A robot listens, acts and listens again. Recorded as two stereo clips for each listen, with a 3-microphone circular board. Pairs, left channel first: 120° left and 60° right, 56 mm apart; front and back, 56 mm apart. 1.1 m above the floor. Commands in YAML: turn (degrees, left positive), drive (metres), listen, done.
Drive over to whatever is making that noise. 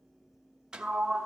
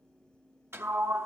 turn: -135
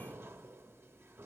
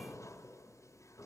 turn: -15
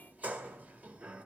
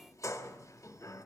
drive: 1.0
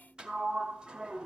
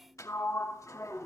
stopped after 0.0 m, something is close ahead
turn: 15
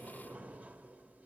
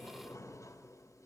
done: "Blocked. The sliding door is further on, straight ahead."